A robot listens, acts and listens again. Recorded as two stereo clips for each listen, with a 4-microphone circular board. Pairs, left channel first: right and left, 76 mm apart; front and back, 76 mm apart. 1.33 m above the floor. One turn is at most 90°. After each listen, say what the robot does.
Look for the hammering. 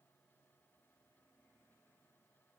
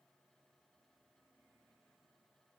Keep listening.
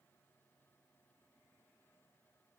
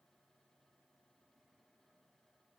Keep listening.
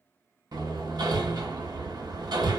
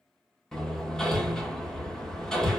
Turn 80° left.
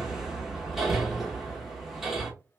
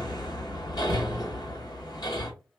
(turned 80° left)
Facing the hammering.